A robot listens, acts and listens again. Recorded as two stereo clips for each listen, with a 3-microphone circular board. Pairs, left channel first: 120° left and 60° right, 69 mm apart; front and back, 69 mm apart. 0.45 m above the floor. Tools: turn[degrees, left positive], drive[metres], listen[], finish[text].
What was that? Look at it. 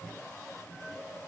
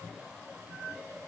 Action: listen[]
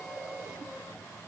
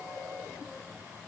Action: listen[]
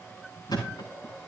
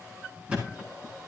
Thought: The thud: 105° left.
Action: turn[105]
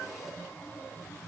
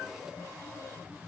Action: finish[I heard a thud from this way, but can't make it out now.]